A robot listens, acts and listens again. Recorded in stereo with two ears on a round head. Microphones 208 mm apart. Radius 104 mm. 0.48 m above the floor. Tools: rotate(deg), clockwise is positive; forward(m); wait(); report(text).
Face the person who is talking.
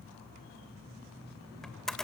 wait()
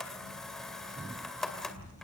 rotate(-90)
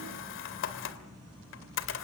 wait()
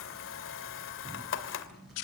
wait()
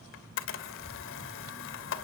report("I heard a child speaking from this way, but can't make it out now.")